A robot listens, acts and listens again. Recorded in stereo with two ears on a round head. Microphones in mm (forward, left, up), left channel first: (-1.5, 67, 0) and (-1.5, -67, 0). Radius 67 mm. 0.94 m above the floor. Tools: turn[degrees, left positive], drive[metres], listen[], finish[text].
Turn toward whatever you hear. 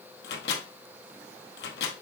Action: turn[90]
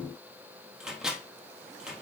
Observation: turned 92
Action: finish[Found it: a microwave, straight ahead.]